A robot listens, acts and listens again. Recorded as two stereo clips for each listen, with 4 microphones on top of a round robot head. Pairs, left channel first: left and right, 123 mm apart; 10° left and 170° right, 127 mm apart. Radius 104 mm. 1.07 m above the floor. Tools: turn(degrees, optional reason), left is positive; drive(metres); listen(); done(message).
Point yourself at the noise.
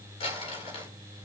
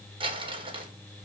turn(degrees=140, reason="The crumpling: 140° left.")
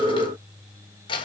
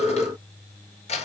turn(degrees=40, reason="The crumpling is now 40° left.")
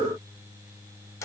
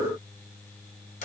turn(degrees=25, reason="The crumpling is now 25° left.")
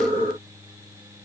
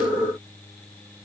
listen()
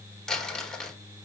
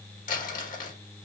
done("Found it: crumpling, straight ahead.")